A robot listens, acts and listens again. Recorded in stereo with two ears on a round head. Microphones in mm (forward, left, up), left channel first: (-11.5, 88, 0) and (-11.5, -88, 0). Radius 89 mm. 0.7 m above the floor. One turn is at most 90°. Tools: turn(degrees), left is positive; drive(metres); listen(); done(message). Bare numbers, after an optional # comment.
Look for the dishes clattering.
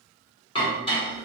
# The dishes clattering: about 25° left or 155° left.
turn(25)
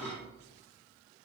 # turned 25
done("Found it: dishes clattering, straight ahead.")